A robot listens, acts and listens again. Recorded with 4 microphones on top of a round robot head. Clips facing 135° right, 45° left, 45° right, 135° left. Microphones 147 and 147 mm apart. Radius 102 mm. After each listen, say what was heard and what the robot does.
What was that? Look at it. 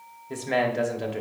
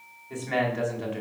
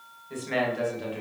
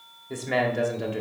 The man speaking: 175° left. Turn 175° left.
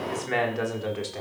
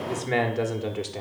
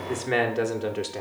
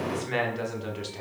The man speaking is now 25° right. Turn 25° right.
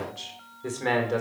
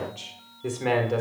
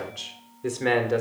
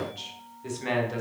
The man speaking is now 40° right. Turn 40° right.
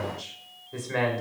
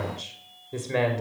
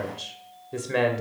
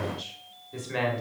The man speaking is now 15° right. Turn 15° right.
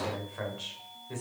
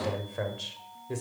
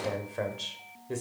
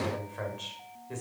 Found it: a man speaking, straight ahead, 1 to 2 m away.